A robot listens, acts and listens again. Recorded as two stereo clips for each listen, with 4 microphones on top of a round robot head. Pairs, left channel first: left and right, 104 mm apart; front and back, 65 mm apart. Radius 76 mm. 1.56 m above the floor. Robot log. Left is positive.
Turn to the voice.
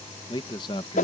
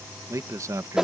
note: The man speaking: 140° left.
cmd yaw +140
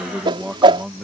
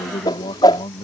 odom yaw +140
end: Facing the man speaking.